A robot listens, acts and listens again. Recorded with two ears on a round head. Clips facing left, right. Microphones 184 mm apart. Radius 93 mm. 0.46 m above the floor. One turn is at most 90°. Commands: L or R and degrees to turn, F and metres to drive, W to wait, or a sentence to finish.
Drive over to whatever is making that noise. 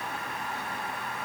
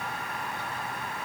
W
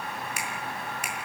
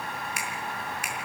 L90
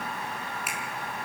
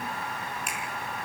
F1.0
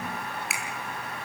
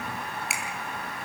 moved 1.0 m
F1.0
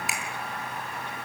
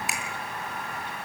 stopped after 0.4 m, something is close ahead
Something is in my way. I am facing the finger snap but have not reached it.